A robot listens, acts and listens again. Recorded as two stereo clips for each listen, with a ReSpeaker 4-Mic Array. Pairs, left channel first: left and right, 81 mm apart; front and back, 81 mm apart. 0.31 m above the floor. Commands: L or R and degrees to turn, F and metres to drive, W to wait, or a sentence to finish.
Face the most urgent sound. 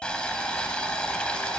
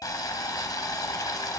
W
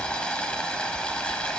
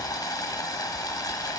W
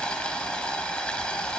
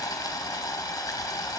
I can't make out anything urgent, only boiling.